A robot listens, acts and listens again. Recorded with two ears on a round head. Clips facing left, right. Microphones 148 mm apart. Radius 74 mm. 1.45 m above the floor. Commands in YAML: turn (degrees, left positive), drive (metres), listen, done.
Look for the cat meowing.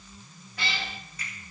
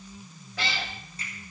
turn: -60
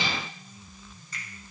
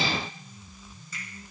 listen: true
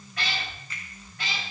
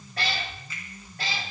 turn: -35
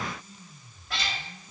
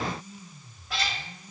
done: "Found it: a cat meowing, straight ahead, 2 to 4 m away."